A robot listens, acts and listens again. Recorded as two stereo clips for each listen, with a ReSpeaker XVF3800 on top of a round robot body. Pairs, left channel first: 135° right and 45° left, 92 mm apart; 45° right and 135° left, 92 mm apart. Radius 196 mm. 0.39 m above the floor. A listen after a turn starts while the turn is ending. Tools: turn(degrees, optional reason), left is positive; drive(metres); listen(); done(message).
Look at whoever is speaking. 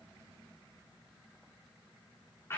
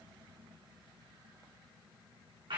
listen()
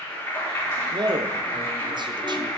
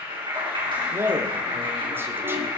turn(degrees=70, reason="The man speaking: 70° left.")
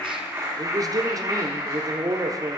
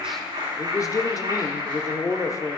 done("Facing the man speaking.")